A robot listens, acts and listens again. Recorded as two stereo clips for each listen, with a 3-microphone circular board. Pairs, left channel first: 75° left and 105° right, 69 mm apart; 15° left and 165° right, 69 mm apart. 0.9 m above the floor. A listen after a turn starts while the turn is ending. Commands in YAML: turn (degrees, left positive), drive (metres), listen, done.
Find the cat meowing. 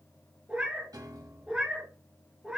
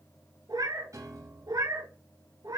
turn: 175
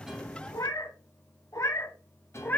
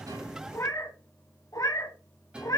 turn: 15
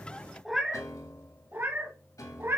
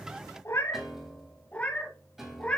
turn: -55
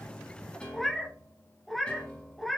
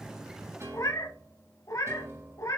turn: -15
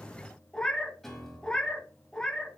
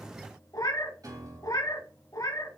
done: "Facing the cat meowing, 1 to 2 m away."